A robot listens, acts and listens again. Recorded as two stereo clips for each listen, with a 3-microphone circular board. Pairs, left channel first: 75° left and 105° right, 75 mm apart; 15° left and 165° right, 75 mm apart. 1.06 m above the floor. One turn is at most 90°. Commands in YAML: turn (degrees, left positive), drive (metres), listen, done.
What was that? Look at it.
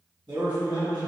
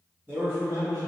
turn: -90
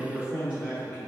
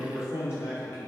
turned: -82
turn: -35
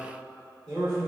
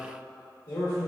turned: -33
turn: -10
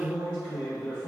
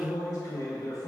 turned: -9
done: "Facing the man speaking, 2 to 4 m away."